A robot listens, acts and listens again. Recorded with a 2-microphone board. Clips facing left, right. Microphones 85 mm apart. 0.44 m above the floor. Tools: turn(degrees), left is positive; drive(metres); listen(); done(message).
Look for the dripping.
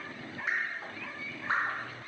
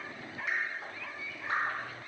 turn(degrees=25)
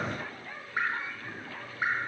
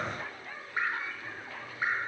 done("Found it: dripping, straight ahead, 2 to 4 m away.")